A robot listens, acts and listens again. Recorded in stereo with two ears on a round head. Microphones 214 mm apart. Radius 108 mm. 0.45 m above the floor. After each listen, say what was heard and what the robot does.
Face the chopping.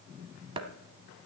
The chopping: about 25° right or 155° right. Turn 25° right.
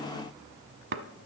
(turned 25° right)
So it is at 130° right. Turn 130° right.
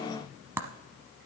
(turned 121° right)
The chopping is now 10° right. Turn 10° right.
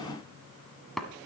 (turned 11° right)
Facing the chopping, under 1 m away.